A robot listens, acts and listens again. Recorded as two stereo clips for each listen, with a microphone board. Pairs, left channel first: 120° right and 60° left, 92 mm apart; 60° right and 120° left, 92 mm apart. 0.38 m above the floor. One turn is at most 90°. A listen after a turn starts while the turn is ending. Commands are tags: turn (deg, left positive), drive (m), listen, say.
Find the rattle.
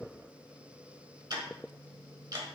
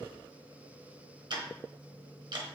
<listen/>
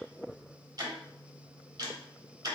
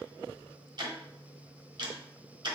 <listen/>
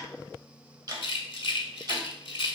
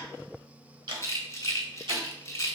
<turn deg="-90"/>
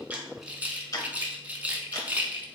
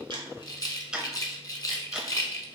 <turn deg="-15"/>
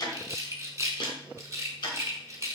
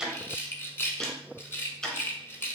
<say>Found it: a rattle, straight ahead.</say>